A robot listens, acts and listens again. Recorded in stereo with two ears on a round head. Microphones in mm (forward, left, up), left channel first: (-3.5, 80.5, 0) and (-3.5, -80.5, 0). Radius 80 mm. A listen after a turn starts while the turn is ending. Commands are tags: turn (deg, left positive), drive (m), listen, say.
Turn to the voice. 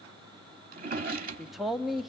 <turn deg="30"/>
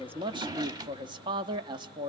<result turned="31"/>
<turn deg="-30"/>
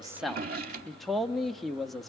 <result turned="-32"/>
<say>Facing the man speaking, under 1 m away.</say>